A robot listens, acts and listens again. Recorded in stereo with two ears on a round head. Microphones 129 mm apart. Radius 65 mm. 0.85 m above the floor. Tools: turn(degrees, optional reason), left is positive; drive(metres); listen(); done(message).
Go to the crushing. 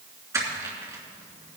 turn(degrees=-20, reason="The crushing: about 20° right or 160° right.")
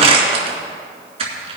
turn(degrees=-135, reason="So it is at 135° right.")
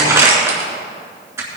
turn(degrees=-20, reason="The crushing is now 20° right.")
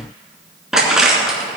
drive(metres=1.0)
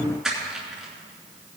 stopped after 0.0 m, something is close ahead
done("Something is in my way. I am facing the crushing but have not reached it.")